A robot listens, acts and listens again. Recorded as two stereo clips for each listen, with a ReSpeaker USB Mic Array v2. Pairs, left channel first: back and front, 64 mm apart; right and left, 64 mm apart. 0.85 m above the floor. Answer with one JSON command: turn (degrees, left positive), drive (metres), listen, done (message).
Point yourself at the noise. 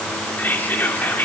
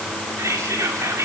{"turn": 120}
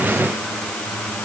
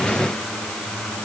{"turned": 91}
{"turn": 30}
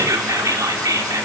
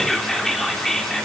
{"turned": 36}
{"done": "Facing the whispering, 2 to 4 m away."}